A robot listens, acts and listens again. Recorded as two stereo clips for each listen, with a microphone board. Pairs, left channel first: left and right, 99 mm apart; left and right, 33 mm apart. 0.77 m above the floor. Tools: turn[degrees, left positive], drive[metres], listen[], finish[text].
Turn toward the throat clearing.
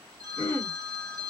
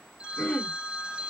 Thought: The throat clearing: about 20° left or 160° left.
Action: turn[20]
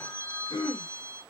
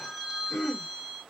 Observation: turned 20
Thought: So it is at 140° left.
Action: turn[140]
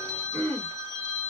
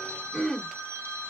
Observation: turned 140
Thought: The throat clearing is now 20° left.
Action: turn[20]
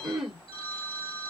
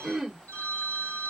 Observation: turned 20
Action: finish[Found it: throat clearing, straight ahead, 1 to 2 m away.]